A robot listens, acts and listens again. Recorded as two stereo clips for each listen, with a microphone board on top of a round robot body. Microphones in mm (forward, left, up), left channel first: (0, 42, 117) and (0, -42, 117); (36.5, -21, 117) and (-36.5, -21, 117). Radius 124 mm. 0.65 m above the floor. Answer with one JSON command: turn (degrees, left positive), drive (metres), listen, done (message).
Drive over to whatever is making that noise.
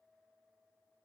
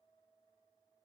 {"listen": true}
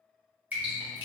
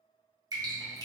{"turn": -160}
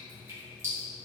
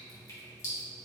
{"turn": -40}
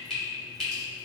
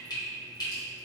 {"drive": 1.0}
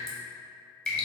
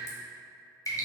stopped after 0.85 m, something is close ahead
{"done": "I am next to the dripping."}